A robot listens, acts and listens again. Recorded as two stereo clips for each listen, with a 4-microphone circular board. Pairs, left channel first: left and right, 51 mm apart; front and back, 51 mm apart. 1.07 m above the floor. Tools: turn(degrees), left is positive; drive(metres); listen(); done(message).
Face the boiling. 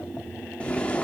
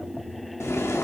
turn(degrees=25)
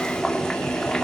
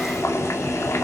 turn(degrees=10)
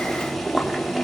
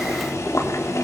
done("Found it: boiling, straight ahead.")